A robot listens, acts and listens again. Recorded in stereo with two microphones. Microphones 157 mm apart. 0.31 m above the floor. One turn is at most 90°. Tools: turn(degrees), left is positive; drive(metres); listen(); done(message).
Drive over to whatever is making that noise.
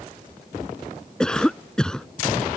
turn(degrees=30)
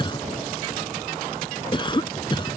turn(degrees=90)
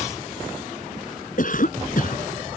turn(degrees=65)
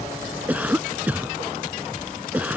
turn(degrees=-10)
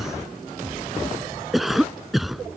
drive(metres=1.0)
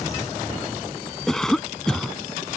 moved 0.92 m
drive(metres=1.0)
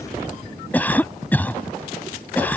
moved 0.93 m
turn(degrees=15)
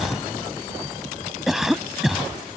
drive(metres=1.0)
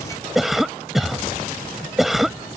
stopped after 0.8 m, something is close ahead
done("Arrived at the cough, straight ahead.")